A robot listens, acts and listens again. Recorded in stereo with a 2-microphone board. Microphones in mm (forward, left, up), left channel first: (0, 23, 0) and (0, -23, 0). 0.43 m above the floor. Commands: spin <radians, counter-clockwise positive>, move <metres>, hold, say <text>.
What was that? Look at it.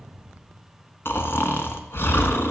spin 0.96
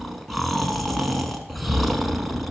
say Found it: snoring, straight ahead, under 1 m away.